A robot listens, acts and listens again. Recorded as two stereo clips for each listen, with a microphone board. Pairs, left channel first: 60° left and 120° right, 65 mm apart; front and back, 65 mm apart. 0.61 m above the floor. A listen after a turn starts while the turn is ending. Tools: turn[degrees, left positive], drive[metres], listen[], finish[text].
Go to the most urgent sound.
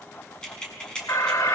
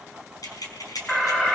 Thought: The alarm: 75° left.
Action: turn[75]
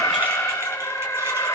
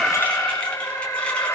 Thought: The alarm is now 20° left.
Action: turn[20]
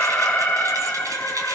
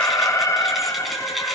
Action: drive[1.0]
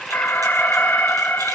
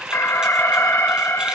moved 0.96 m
Action: drive[1.0]
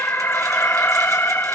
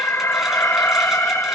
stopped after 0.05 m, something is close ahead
Thought: The alarm is now 10° left.
Action: turn[10]
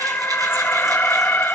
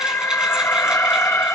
Action: finish[I am next to the alarm.]